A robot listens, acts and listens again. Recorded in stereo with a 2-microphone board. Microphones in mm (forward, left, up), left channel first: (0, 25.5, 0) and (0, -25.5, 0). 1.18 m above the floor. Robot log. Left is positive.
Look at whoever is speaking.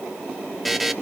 cmd idle
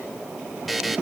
cmd idle
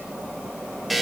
end: I can't make out anyone speaking to turn to.